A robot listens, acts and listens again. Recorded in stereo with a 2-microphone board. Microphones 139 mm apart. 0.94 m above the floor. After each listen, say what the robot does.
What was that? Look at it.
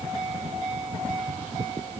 Keep listening.
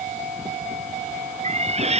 Turn 50° right.
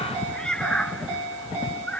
Turn 10° left.
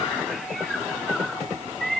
Found it: a cat meowing, straight ahead.